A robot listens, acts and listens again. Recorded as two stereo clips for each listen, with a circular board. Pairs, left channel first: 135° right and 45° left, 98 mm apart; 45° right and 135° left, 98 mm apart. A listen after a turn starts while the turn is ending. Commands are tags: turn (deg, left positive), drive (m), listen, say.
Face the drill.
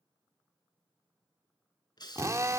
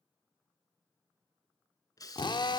<turn deg="-10"/>
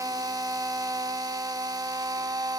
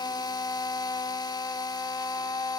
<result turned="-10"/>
<say>Facing the drill, under 1 m away.</say>